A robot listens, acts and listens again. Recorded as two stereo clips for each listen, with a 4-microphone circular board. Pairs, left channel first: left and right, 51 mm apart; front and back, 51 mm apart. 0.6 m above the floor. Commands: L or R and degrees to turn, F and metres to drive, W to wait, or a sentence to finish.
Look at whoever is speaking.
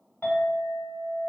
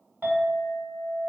W
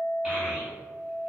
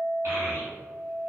L180
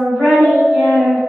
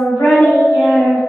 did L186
R10
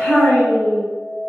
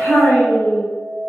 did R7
Facing the child speaking.